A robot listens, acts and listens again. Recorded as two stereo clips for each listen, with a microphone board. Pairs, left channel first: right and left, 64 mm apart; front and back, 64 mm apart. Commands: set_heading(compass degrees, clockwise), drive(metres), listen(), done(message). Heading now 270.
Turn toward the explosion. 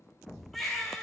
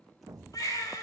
set_heading(90)
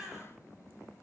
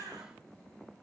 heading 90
done("Facing where the explosion came from. I can't hear it now.")